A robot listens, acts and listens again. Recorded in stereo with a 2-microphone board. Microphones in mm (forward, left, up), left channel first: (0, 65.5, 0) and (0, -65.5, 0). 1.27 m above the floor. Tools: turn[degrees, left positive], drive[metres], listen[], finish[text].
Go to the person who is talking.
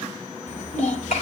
Action: turn[90]
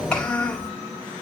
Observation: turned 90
Thought: So it is at 10° left.
Action: turn[10]
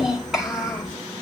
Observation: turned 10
Action: drive[1.0]
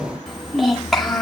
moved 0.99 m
Action: drive[1.0]
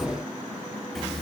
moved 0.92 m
Action: drive[1.0]
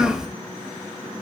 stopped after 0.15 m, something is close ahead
Action: finish[Arrived at the child speaking, straight ahead.]